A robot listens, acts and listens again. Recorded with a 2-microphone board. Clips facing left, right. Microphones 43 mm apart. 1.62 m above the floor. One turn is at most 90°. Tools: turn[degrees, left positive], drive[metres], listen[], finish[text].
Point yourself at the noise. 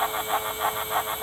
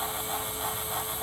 Action: listen[]
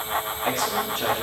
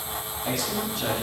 Thought: The man speaking: about 50° left or 130° left.
Action: turn[50]
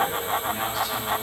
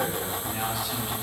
Action: finish[Facing the man speaking.]